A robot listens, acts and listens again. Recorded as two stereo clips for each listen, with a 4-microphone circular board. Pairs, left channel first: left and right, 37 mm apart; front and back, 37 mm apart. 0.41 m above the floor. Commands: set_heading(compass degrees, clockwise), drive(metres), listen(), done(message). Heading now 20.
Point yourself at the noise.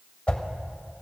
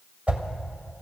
set_heading(245)
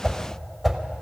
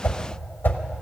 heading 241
done("Facing the whoosh.")